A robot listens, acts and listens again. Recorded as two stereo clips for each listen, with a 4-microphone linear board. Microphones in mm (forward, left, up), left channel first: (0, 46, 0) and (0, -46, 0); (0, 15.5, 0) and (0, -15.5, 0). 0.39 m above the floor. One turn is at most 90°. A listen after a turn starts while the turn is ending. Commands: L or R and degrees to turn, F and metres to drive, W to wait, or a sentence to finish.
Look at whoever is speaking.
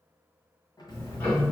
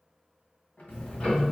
W
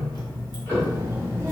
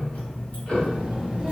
R25
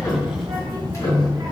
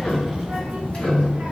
R90
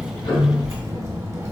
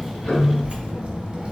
R45
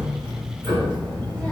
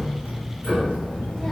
L10
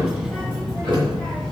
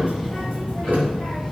Facing the child speaking.